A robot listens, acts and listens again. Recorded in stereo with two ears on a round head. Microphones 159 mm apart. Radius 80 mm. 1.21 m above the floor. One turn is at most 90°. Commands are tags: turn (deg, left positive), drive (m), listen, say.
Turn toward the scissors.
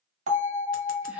<listen/>
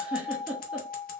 <listen/>
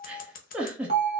<turn deg="50"/>
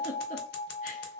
<turn deg="70"/>
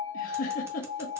<listen/>
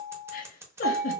<turn deg="-15"/>
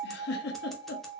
<listen/>
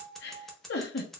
<say>Facing the scissors, under 1 m away.</say>